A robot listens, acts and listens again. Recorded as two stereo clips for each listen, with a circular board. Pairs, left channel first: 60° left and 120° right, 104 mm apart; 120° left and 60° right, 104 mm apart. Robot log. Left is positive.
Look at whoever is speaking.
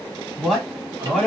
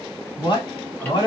note: The man speaking: 155° left.
cmd yaw +155
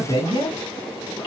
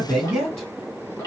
note: The man speaking is now 35° left.
cmd yaw +35
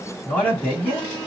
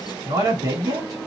end: Facing the man speaking, 2 to 4 m away.